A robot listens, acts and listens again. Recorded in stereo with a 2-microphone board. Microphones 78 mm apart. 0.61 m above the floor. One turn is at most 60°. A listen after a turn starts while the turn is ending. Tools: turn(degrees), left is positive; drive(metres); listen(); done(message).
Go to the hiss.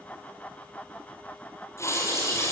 turn(degrees=35)
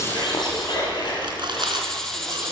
drive(metres=1.0)
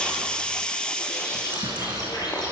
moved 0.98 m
turn(degrees=15)
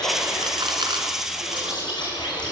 drive(metres=1.0)
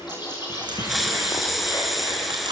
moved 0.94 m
drive(metres=1.0)
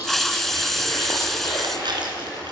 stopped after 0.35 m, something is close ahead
done("I am next to the hiss.")